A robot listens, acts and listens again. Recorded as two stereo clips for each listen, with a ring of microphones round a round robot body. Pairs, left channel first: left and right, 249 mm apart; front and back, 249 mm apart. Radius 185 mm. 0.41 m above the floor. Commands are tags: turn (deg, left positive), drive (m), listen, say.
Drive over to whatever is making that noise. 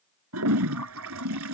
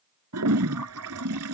<turn deg="-140"/>
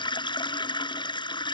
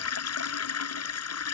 <turn deg="20"/>
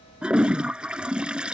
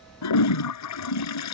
<drive m="1.0"/>
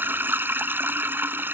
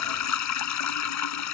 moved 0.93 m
<turn deg="-10"/>
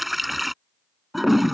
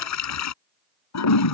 <drive m="1.0"/>
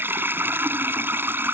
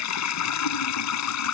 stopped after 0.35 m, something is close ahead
<turn deg="-10"/>
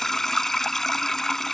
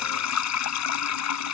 <say>Blocked. The toilet flushing is further on, straight ahead.</say>